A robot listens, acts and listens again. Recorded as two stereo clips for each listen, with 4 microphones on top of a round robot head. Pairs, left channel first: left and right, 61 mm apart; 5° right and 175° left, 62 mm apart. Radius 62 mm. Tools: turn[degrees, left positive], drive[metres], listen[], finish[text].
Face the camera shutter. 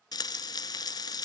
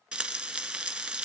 Action: listen[]
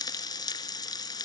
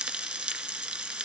Action: listen[]
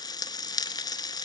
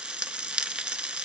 Action: finish[I can't make out a camera shutter, only frying.]